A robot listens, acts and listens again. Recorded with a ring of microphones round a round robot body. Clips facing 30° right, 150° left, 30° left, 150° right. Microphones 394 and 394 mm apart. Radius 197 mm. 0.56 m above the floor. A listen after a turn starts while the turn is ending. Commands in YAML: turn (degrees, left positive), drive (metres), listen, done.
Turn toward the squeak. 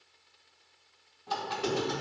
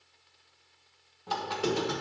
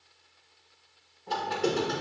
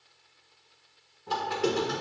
turn: 135
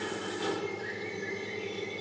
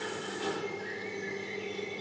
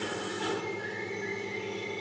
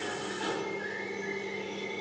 turn: -25
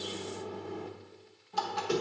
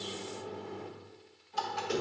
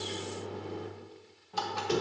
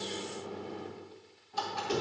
turn: 10
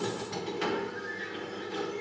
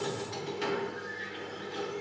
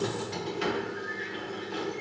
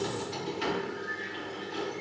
done: "Facing the squeak."